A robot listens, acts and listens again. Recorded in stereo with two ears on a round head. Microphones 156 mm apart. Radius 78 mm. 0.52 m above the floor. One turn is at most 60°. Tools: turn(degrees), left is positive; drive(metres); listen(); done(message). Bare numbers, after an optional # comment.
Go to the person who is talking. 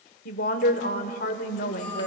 # The woman speaking: about 55° left or 125° left.
turn(55)
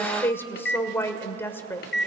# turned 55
# So it is at 15° left.
turn(15)
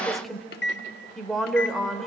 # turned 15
drive(1.0)
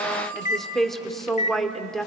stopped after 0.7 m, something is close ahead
done("I am next to the woman speaking.")